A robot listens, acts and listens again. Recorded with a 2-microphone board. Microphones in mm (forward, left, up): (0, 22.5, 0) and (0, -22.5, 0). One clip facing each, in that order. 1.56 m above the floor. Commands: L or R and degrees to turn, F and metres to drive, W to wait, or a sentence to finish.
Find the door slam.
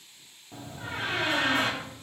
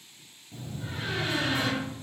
L45
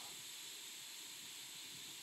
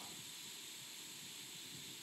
W
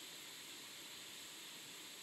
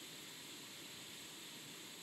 I heard a door slam, but can't make it out now. It was about straight ahead or 90° left.